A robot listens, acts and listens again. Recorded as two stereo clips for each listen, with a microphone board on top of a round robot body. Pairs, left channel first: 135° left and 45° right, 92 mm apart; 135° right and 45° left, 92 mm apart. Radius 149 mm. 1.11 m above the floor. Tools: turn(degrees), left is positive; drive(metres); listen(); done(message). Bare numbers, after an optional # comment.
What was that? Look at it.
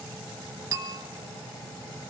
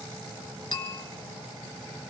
# The bell: 90° right.
turn(-90)
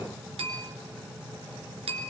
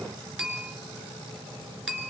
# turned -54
# The bell is now 40° right.
turn(-40)
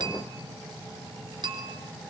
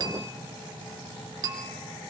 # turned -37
done("Found it: a bell, straight ahead, 2 to 4 m away.")